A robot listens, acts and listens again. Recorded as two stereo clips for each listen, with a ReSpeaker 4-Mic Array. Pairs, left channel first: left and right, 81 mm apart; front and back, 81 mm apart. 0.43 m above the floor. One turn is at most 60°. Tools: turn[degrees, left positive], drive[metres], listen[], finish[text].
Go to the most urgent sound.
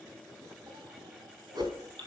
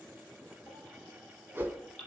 Thought: The baby crying: 75° right.
Action: turn[-60]
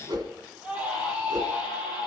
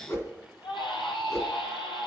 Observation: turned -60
Thought: The baby crying is now 15° right.
Action: turn[-15]
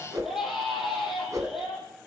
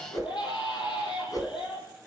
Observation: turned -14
Action: drive[1.0]
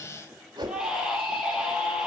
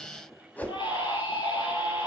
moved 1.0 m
Thought: The baby crying is now 10° right.
Action: turn[-10]
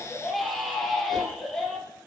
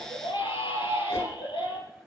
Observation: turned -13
Action: drive[1.0]
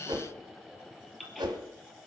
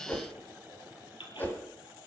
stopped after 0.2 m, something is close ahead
Action: finish[Something is in my way. I am facing the baby crying but have not reached it.]